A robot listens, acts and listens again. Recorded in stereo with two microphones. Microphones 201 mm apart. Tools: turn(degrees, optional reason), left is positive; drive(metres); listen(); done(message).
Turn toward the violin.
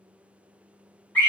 listen()
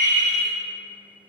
listen()
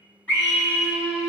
turn(degrees=-50, reason="The violin: about 50° right or 130° right.")
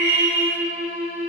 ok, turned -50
done("Found it: a violin, straight ahead, 1 to 2 m away.")